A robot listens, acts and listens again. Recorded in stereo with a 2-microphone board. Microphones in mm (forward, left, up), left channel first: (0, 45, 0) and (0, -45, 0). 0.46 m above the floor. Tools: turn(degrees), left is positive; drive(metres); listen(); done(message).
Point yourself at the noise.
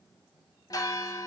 turn(degrees=45)
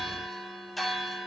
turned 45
done("Found it: a bell, straight ahead.")